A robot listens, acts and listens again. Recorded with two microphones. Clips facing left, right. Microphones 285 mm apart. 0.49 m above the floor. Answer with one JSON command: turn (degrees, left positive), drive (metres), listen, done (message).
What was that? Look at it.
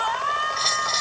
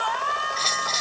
{"turn": -30}
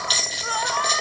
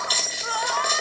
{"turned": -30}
{"done": "Facing the bell, over 4 m away."}